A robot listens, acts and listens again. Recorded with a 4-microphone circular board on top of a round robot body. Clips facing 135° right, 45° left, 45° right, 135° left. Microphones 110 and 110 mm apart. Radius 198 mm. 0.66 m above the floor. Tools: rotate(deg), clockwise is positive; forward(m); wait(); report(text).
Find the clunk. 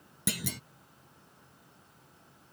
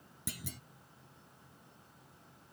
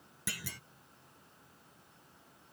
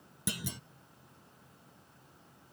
rotate(155)
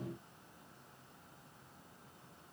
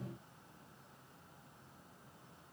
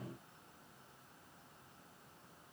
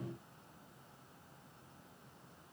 report("Facing where the clunk came from. I can't hear it now.")